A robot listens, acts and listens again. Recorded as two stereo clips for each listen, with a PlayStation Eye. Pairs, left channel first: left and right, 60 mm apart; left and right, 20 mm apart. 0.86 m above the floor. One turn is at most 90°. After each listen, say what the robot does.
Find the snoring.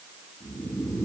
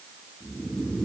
Turn 55° left.
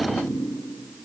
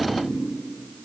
Turn 70° left.
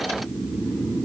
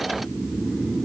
Found it: snoring, straight ahead.